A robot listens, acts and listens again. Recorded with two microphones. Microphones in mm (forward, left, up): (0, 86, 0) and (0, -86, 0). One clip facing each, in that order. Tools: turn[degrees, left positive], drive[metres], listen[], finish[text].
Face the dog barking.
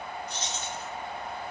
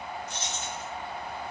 Action: listen[]
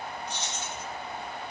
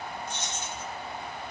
Action: listen[]
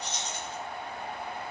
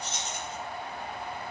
Action: finish[I can't make out a dog barking, only keys jangling.]